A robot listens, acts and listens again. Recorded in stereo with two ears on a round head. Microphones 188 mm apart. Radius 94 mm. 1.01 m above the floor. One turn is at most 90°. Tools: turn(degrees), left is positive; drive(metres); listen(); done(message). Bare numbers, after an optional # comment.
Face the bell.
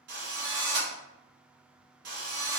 listen()
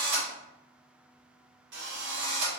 listen()
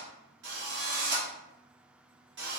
done("I can't make out a bell, only a drill.")